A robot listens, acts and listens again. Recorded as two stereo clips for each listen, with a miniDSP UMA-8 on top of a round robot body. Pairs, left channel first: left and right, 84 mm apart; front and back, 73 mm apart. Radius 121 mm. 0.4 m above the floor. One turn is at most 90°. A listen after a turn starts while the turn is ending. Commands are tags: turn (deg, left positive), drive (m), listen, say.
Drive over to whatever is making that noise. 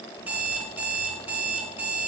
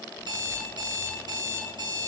<turn deg="-90"/>
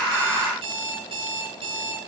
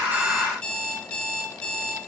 <turn deg="-80"/>
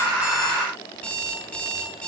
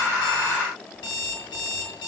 <turn deg="10"/>
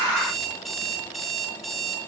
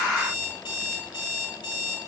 <drive m="1.0"/>
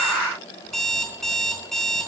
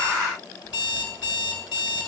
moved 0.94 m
<drive m="1.0"/>
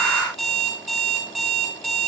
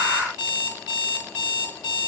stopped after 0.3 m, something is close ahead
<say>Blocked. The alarm clock is further on, straight ahead.</say>